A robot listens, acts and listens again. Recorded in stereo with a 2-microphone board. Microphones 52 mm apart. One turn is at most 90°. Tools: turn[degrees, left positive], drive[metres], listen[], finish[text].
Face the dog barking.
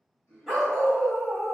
Action: turn[-30]
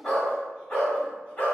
Thought: So it is at 25° left.
Action: turn[25]
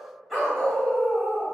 Action: finish[Found it: a dog barking, straight ahead.]